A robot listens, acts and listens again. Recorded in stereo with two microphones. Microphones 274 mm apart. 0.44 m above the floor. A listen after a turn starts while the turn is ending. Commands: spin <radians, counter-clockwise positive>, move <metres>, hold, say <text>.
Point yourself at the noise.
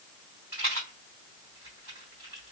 spin 0.52
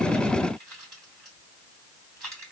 hold
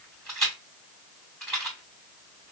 say Found it: a rattle, straight ahead, 2 to 4 m away.